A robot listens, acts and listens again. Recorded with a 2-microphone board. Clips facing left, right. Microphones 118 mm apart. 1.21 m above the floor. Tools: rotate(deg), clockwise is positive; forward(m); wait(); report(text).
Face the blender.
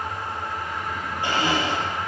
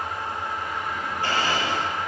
rotate(-20)
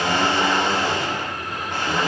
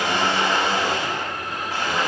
report("Found it: a blender, straight ahead, over 4 m away.")